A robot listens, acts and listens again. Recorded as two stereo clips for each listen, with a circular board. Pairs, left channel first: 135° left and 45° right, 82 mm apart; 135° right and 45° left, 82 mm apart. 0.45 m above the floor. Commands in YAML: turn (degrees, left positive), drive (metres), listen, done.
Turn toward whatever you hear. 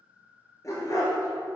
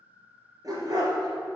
turn: 80
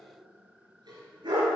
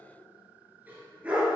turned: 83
turn: -30
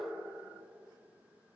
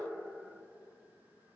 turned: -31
listen: true
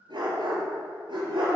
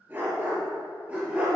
turn: -30
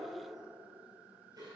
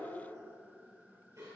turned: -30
listen: true
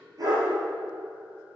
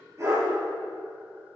done: "Facing the dog barking, 2 to 4 m away."